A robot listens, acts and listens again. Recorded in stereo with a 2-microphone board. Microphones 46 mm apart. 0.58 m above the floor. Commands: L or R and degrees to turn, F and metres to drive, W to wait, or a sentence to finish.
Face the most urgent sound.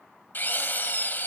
W
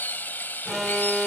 R30
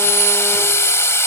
W
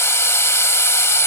W
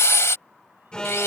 L20
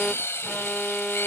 Found it: an alarm, straight ahead.